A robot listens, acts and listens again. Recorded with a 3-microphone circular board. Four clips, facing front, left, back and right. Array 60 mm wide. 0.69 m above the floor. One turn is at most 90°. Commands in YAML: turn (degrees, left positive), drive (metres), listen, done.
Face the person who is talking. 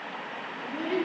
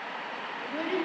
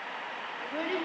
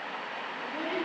turn: 90
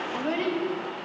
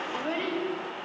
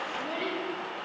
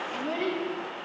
turn: 40
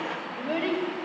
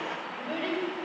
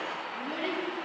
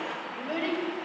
turn: -10
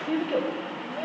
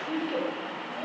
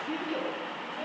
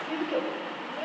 turn: -15
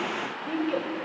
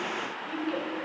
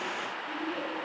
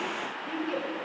turn: -10
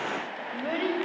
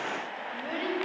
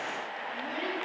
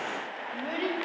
done: "Found it: a child speaking, straight ahead, 2 to 4 m away."